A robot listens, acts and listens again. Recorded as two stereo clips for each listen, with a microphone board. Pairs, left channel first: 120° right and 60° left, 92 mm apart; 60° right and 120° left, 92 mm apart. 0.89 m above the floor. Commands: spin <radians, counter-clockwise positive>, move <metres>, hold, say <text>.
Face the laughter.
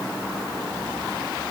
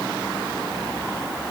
hold
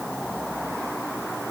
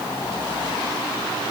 hold
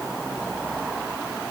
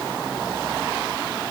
say I can't make out laughter.